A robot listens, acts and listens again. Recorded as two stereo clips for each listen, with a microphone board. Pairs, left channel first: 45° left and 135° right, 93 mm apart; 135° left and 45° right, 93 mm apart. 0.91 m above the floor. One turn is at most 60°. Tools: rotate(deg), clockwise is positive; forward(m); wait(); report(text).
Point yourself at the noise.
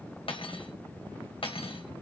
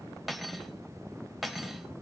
rotate(-45)
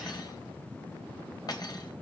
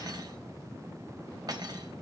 report("Facing the cutlery clinking, 2 to 4 m away.")